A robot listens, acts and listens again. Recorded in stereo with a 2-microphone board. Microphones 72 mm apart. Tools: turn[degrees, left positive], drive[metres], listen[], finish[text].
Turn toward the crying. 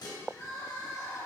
Thought: The crying: about 45° left or 135° left.
Action: turn[45]
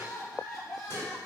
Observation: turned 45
Action: finish[Facing the crying, 2 to 4 m away.]